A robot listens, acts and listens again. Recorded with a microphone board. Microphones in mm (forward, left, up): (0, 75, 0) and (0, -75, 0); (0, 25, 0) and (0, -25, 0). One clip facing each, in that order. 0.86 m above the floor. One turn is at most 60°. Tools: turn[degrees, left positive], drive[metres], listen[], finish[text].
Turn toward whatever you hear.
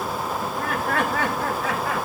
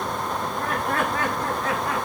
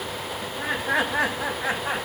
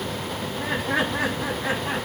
Thought: The laughter: about 75° left or 105° left.
Action: turn[60]
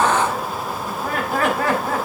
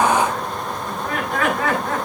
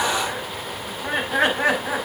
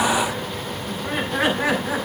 Thought: So it is at 35° left.
Action: turn[35]
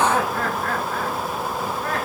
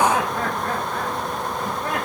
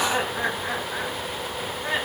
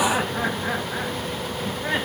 Thought: The laughter is now 15° right.
Action: turn[-15]
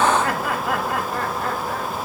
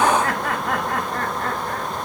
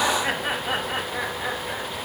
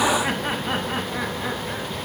Action: finish[Found it: laughter, straight ahead.]